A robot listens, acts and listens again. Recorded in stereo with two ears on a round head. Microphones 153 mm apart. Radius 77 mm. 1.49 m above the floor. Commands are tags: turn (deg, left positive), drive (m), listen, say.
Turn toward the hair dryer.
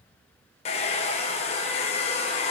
<turn deg="35"/>
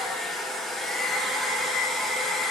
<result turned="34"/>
<say>Found it: a hair dryer, straight ahead.</say>